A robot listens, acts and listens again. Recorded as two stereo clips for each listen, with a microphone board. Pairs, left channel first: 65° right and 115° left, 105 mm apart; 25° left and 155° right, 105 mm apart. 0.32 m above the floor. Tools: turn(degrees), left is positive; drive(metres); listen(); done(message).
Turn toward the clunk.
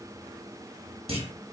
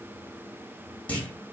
turn(degrees=100)
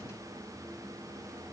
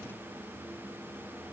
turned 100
done("I heard a clunk from this way, but can't make it out now.")